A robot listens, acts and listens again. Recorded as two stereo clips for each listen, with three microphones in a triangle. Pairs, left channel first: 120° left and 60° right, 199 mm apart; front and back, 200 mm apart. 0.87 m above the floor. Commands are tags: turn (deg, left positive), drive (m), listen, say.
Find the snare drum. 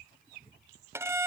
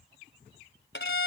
<listen/>
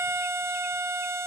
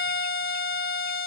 <listen/>
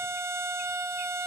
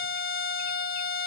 <say>I can't make out a snare drum to turn to.</say>